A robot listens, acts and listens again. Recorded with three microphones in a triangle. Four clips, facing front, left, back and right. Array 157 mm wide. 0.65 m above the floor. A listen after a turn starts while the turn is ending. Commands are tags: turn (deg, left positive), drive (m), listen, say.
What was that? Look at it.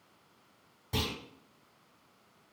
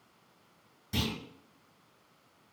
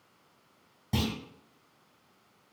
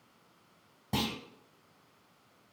<turn deg="-105"/>
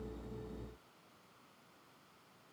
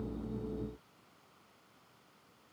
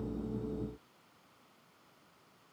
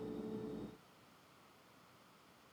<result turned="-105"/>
<say>Facing where the clunk came from. I can't hear it now.</say>